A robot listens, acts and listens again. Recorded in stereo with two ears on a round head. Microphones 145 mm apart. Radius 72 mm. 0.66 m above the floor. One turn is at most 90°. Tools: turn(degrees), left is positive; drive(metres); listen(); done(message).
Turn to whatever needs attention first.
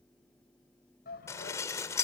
turn(degrees=65)
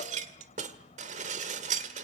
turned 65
listen()
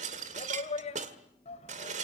turn(degrees=45)
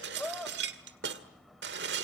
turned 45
done("Found it: a shout, straight ahead, over 4 m away.")